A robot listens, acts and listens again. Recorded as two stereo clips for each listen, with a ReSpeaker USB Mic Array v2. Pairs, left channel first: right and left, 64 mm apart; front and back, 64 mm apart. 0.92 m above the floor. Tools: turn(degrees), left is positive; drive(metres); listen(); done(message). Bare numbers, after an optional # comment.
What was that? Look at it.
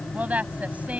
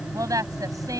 # The woman speaking: 155° left.
turn(155)
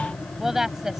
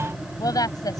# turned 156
# The woman speaking is now 10° left.
turn(10)
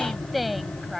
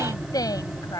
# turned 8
done("Facing the woman speaking.")